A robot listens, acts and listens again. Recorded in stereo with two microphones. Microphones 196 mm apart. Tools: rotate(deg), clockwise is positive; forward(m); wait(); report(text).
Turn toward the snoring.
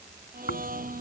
rotate(-65)
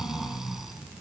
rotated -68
report("Found it: snoring, straight ahead.")